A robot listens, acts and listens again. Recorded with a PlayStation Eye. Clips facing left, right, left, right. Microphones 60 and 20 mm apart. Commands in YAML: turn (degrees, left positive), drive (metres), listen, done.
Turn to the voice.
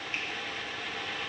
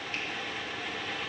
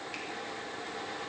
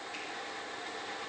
listen: true
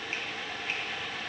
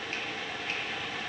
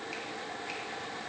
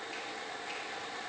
listen: true
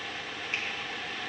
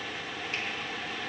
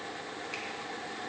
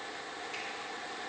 done: "I can't make out anyone speaking to turn to."